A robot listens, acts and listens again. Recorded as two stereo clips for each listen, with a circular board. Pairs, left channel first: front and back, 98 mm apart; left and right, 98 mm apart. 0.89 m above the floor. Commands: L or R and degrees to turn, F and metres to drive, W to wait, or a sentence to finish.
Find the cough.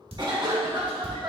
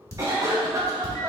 R145
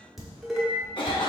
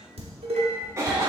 R30
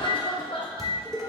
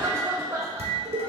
R25
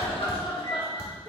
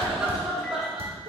Found it: a cough, straight ahead, under 1 m away.